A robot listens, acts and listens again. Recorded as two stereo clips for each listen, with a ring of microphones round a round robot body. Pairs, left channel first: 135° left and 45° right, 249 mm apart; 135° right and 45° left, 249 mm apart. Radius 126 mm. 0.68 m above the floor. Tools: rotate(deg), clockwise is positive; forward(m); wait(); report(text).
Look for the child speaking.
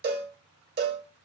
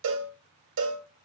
wait()
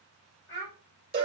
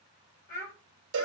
rotate(-180)
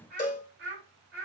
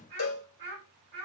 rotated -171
report("Found it: a child speaking, straight ahead.")